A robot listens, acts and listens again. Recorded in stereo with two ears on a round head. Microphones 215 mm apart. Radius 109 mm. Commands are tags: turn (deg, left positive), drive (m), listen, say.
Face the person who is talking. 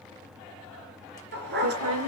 <turn deg="-90"/>
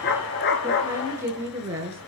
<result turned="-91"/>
<turn deg="-10"/>
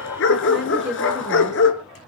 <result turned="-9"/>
<say>Facing the woman speaking.</say>